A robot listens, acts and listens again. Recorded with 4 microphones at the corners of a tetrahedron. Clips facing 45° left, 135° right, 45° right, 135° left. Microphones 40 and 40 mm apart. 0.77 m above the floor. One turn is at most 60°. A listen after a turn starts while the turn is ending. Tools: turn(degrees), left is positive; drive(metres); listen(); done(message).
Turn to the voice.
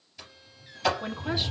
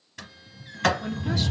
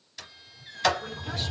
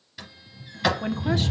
turn(degrees=60)
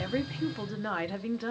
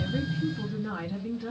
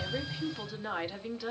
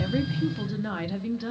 turn(degrees=45)
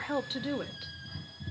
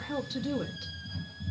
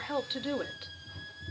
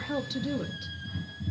turn(degrees=-10)
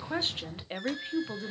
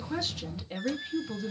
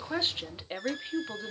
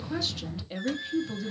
done("Facing the woman speaking, 1 to 2 m away.")